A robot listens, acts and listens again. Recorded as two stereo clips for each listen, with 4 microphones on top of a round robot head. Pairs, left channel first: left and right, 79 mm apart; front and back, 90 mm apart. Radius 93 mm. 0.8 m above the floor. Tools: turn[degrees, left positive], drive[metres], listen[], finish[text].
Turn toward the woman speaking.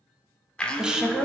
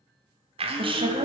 Thought: The woman speaking: 175° right.
Action: turn[-175]
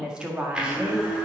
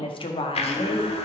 Thought: The woman speaking is now 15° right.
Action: turn[-15]
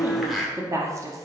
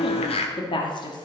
Thought: The woman speaking is now 40° right.
Action: turn[-40]
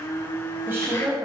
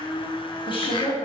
Thought: The woman speaking is now 30° right.
Action: turn[-30]
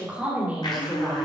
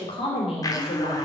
Thought: The woman speaking is now 15° right.
Action: turn[-15]
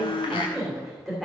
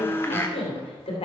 Action: finish[Facing the woman speaking.]